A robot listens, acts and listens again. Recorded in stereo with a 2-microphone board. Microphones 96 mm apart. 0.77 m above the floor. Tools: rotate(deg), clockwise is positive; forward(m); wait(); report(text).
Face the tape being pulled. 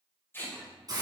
rotate(-25)
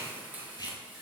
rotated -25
rotate(-130)
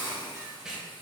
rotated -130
rotate(10)
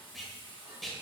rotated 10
report("Found it: tape being pulled, straight ahead.")